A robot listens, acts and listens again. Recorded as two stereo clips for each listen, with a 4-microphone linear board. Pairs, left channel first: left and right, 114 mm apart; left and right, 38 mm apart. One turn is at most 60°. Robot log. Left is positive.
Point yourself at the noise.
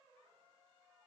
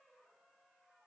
cmd idle
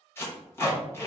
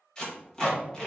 note: The tape being pulled: about 20° left or 160° left.
cmd yaw +20
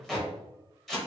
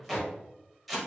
end: Facing the tape being pulled, 1 to 2 m away.